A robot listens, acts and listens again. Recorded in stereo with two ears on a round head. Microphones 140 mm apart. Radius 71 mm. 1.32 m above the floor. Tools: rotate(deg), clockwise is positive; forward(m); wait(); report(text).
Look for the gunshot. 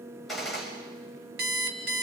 rotate(-30)
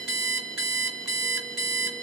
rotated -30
wait()
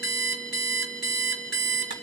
report("I heard a gunshot, but can't make it out now. It was about 30° right or 150° left.")